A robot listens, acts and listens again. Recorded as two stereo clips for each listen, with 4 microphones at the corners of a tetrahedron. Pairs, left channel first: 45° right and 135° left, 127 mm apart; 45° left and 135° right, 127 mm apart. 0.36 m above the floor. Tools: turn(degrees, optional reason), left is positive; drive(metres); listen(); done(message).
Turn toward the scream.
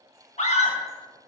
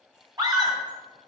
turn(degrees=-75, reason="The scream: 75° right.")
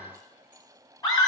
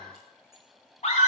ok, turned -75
turn(degrees=15, reason="The scream is now 15° left.")
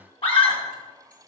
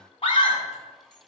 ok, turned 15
done("Found it: a scream, straight ahead, 2 to 4 m away.")